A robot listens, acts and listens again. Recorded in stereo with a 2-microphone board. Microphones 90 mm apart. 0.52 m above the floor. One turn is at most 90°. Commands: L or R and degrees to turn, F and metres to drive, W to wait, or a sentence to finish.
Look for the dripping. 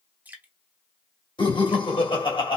R20
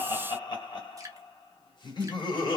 R90
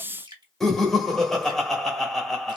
R75
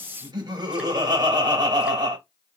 W
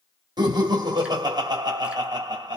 W
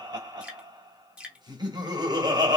R10
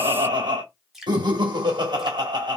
Facing the dripping, 1 to 2 m away.